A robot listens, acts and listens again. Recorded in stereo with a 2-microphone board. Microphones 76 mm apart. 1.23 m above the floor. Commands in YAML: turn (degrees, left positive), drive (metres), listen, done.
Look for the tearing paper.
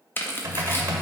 turn: 30
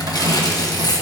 turn: 120
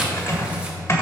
listen: true
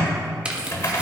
listen: true
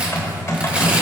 done: "I heard tearing paper from this way, but can't make it out now."